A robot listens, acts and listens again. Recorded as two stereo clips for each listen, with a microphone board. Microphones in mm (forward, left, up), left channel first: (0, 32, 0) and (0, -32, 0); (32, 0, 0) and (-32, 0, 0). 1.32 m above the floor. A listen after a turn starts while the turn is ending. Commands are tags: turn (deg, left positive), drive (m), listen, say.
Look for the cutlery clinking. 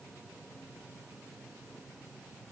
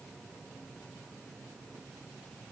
<listen/>
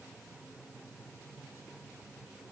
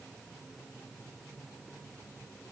<listen/>
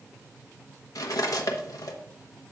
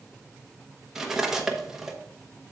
<turn deg="100"/>
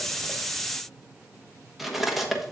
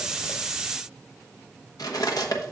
<say>Found it: cutlery clinking, straight ahead, 1 to 2 m away.</say>